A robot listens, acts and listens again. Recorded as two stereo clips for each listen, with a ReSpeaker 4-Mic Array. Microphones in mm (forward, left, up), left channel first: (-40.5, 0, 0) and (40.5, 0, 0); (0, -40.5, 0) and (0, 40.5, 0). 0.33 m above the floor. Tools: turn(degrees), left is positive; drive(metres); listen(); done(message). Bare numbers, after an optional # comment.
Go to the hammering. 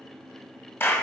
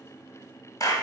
listen()
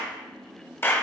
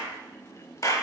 listen()
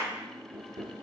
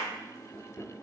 # The hammering: 15° right.
turn(-15)
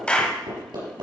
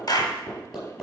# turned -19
drive(1.0)
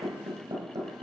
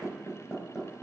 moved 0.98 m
drive(1.0)
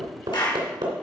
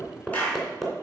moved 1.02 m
drive(1.0)
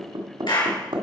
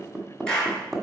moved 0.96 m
drive(1.0)
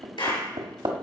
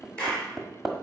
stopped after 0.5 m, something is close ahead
done("I am next to the hammering.")